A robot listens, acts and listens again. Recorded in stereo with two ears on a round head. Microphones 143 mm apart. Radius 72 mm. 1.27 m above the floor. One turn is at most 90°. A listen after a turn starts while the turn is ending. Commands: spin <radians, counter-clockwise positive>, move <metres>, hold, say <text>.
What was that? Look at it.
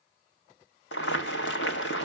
spin 1.57
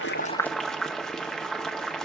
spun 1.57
say Found it: boiling, straight ahead, 1 to 2 m away.